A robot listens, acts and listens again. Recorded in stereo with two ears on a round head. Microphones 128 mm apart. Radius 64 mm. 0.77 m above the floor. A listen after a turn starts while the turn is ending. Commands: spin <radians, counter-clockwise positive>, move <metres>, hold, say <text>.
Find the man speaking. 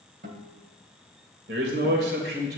spin -1.57
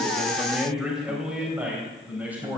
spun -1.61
spin -0.17
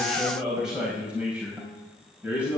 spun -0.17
spin -0.17
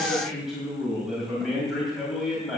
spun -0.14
say Facing the man speaking, over 4 m away.